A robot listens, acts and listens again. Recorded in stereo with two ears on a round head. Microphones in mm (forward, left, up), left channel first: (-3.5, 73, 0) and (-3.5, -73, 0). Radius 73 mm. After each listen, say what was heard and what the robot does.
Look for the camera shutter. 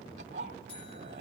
Keep listening.
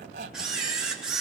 Turn 30° right.
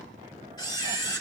So it is at 25° left. Turn 25° left.
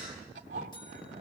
Keep listening.
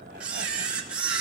The camera shutter is now 10° right. Turn 10° right.
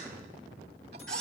Facing the camera shutter.